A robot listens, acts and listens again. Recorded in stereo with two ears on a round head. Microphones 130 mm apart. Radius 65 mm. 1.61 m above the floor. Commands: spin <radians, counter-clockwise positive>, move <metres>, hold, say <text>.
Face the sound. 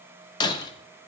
spin 0.52
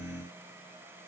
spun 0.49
hold
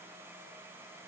say I heard breaking glass, but can't make it out now. It was about straight ahead or 125° left.